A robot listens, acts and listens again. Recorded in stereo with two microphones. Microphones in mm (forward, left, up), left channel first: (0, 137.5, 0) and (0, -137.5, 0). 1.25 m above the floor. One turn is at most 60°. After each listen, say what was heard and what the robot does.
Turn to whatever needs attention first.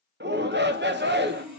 The shout: about 35° right or 145° right. Turn 35° right.
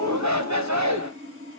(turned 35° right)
So it is at 110° right. Turn 60° right.
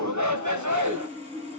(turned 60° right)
The shout is now 80° right. Turn 60° right.
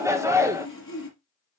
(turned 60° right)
The shout is now 10° right. Turn 10° right.
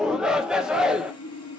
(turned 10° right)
Facing the shout.